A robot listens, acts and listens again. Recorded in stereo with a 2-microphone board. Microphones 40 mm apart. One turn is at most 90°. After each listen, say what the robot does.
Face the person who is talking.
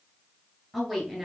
Turn 30° right.
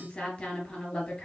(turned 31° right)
Turn 25° left.
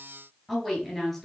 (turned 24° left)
Found it: a woman speaking, straight ahead, 2 to 4 m away.